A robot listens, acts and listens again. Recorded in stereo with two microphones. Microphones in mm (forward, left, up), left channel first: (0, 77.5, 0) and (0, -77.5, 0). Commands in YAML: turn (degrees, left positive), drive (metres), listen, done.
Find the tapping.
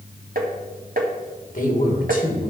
turn: -70
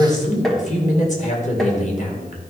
done: "Found it: tapping, straight ahead."